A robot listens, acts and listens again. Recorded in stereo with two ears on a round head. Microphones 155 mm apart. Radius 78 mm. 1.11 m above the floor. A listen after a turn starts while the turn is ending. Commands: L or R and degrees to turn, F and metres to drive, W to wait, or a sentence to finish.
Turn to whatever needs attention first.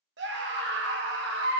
R70
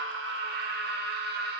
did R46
R60
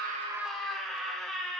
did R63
Facing the scream, 1 to 2 m away.